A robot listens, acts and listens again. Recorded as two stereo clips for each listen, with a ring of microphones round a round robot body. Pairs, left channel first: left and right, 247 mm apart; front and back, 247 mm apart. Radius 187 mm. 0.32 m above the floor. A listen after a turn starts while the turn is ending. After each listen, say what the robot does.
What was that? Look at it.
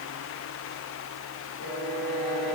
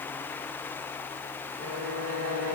Turn 180° left.
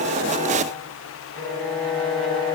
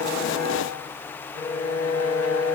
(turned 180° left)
Turn 20° left.
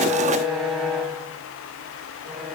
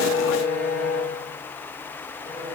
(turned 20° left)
Found it: a violin, straight ahead.